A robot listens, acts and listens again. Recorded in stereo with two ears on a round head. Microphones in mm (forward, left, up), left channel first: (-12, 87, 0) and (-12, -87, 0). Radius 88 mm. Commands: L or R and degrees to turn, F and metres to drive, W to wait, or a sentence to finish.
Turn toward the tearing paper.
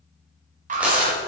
R30
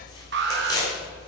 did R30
L20
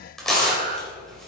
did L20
Facing the tearing paper, 2 to 4 m away.